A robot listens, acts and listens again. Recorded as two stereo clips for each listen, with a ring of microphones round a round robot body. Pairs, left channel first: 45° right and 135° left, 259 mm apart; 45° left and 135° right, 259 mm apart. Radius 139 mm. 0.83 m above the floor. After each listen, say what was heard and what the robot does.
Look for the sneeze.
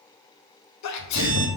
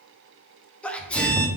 The sneeze: 40° right. Turn 40° right.
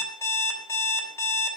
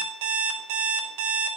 I heard a sneeze from this way, but can't make it out now.